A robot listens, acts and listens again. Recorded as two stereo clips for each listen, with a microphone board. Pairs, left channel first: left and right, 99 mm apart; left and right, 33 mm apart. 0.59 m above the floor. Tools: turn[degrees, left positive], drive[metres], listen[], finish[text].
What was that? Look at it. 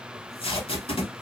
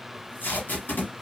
Thought: The tape being pulled: about 75° left or 105° left.
Action: turn[75]
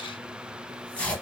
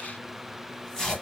Thought: So it is at 15° left.
Action: turn[15]
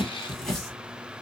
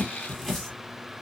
Action: finish[Facing the tape being pulled.]